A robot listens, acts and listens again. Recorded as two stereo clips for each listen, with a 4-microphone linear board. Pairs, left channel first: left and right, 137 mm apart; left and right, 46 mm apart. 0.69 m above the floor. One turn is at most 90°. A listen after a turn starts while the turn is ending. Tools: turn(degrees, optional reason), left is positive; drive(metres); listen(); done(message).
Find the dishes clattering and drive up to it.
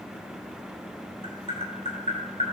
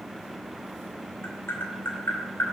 listen()
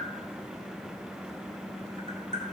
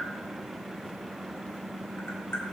listen()
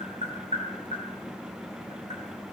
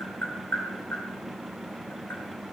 done("I can't make out dishes clattering, only tapping.")